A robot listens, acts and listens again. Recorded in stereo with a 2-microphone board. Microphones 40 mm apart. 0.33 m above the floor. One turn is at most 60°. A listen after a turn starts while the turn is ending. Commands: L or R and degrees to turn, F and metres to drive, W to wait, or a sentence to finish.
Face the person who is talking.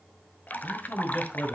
L55
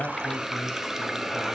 W
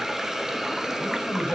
W
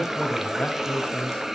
L40
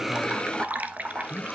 Facing the man speaking, 2 to 4 m away.